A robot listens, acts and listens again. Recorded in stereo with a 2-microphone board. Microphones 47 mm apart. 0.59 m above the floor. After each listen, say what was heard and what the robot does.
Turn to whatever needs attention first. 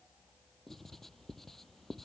Keep listening.
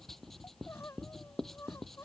Turn 90° left.
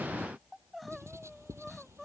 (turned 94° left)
Facing the crying.